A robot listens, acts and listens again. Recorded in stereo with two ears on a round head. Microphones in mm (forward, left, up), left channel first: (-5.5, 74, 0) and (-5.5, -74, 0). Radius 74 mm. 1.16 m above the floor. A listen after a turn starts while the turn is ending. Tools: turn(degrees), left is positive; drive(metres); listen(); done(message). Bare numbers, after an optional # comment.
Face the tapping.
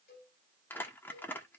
listen()
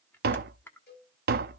# The tapping: about 65° right or 115° right.
turn(-65)
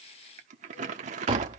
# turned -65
# So it is at 35° right.
turn(-35)
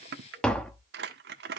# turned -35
done("Found it: tapping, straight ahead, under 1 m away.")